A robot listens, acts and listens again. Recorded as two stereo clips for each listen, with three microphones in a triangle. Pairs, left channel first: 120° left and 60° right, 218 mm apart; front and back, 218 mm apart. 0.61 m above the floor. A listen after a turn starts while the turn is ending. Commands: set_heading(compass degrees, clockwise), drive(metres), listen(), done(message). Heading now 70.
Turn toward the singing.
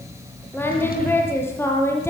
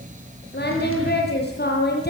set_heading(30)
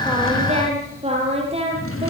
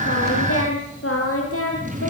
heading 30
done("Facing the singing.")